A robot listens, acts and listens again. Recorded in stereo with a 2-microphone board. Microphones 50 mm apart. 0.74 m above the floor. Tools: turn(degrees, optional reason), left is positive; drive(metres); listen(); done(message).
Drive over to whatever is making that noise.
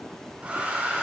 turn(degrees=-30, reason="The hair dryer: about 30° right or 150° right.")
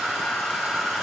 drive(metres=1.0)
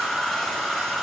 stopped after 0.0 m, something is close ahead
turn(degrees=10, reason="The hair dryer is now 10° left.")
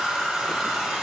done("Something is in my way. I am facing the hair dryer but have not reached it.")